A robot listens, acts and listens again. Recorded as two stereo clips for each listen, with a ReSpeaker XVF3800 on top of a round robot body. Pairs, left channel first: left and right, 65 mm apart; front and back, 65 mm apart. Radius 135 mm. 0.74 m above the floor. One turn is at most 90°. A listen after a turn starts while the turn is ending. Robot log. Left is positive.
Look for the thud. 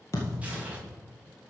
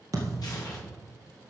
note: The thud: 140° left.
cmd yaw +90
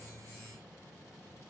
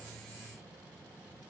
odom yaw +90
note: Nothing new. It was at 50° left.
cmd yaw +50
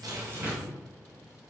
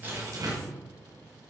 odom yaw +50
end: Facing where the thud came from. I can't hear it now.